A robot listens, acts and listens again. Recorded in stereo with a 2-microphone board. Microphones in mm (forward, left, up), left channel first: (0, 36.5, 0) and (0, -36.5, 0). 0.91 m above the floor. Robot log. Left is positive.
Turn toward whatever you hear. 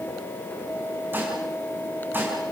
note: The dishes clattering: about 25° right or 155° right.
cmd yaw -25
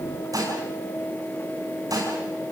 note: So it is at 125° right.
cmd yaw -125
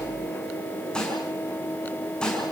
note: The dishes clattering is now 10° left.
cmd yaw +10
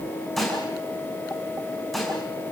end: Facing the dishes clattering.